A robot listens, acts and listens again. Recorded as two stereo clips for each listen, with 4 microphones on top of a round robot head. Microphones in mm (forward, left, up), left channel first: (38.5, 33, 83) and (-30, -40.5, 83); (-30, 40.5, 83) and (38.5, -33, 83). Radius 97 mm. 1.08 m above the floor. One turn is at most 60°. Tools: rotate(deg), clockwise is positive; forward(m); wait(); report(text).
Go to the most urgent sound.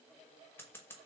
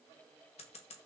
wait()
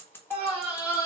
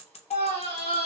rotate(-60)
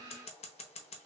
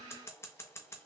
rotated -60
rotate(-60)
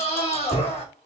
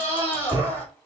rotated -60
rotate(-60)
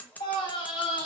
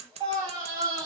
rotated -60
forward(1.0)
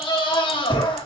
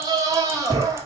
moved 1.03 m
rotate(-10)
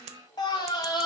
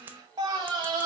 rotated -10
forward(1.0)
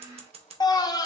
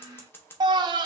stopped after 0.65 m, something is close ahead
report("Arrived at the scream, straight ahead.")